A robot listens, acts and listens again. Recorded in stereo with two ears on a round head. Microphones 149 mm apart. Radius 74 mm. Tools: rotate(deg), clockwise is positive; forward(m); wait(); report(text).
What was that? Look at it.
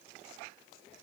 wait()
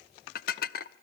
rotate(-60)
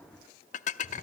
rotate(-50)
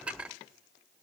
report("Found it: dishes clattering, straight ahead, under 1 m away.")